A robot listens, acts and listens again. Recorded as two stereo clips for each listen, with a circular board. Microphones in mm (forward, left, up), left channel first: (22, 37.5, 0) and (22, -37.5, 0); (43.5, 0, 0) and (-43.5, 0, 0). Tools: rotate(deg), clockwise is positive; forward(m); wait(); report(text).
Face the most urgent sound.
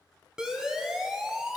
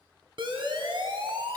rotate(170)
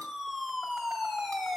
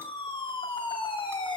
report("Facing the siren.")